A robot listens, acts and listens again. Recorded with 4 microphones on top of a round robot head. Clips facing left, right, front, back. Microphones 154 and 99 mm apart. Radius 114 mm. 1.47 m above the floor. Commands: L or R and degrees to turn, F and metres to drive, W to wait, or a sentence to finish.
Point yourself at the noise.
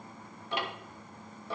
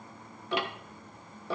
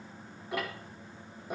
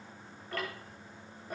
R85
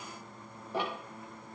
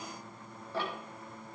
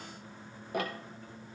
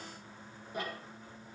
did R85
L15
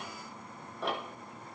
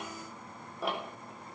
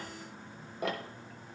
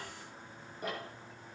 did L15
Facing the ticking.